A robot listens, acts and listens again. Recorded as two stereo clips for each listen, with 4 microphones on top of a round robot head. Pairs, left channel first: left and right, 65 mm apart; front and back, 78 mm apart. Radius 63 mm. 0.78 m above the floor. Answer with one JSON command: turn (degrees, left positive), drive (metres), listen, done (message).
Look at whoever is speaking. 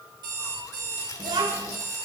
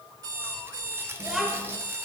{"turn": -95}
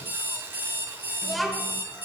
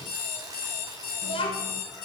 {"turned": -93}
{"done": "Facing the child speaking, 1 to 2 m away."}